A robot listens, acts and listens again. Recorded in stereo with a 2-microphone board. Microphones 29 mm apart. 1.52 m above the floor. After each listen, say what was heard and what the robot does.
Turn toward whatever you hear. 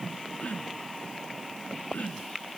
The throat clearing: about 55° left or 125° left. Turn 55° left.
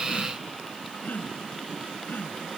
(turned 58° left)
So it is at 65° left. Turn 65° left.
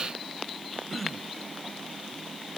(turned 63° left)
Facing the throat clearing.